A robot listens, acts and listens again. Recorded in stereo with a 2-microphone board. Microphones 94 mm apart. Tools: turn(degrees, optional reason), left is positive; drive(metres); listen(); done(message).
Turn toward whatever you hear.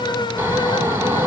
turn(degrees=-25, reason="The snoring: about 25° right or 155° right.")
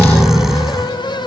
done("Found it: snoring, straight ahead.")